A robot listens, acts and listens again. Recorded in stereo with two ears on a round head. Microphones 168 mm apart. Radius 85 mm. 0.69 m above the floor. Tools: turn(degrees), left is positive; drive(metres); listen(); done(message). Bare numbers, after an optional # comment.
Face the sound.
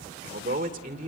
# The man speaking: about 40° right or 140° right.
turn(-40)
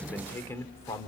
# So it is at 20° left.
turn(20)
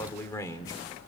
# The man speaking is now 20° left.
turn(20)
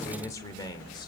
# The man speaking is now 20° left.
turn(20)
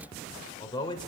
# The man speaking is now 25° left.
turn(25)
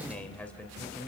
# The man speaking is now 10° left.
turn(10)
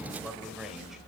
done("Facing the man speaking.")